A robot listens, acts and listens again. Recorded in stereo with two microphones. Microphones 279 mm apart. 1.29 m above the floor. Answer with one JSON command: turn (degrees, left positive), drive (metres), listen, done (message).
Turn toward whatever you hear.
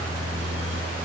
{"listen": true}
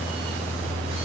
{"listen": true}
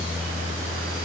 {"done": "I can't make out anything."}